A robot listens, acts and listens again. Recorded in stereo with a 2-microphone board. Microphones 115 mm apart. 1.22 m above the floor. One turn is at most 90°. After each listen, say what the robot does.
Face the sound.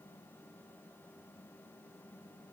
Keep listening.
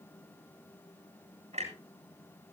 Turn 90° right.
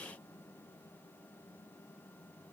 Facing where the clunk came from. I can't hear it now.